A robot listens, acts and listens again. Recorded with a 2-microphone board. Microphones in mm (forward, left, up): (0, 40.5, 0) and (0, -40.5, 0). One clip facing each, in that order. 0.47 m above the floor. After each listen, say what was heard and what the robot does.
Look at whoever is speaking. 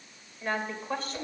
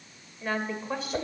Turn 30° right.
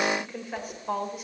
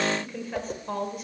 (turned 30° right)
Turn 30° left.
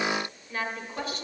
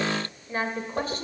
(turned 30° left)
So it is at 40° right. Turn 40° right.
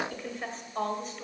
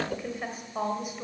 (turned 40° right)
The woman speaking is now 15° right. Turn 15° right.
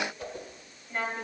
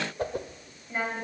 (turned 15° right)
The woman speaking is now 10° right. Turn 10° right.
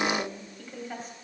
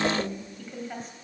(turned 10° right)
Found it: a woman speaking, straight ahead, 2 to 4 m away.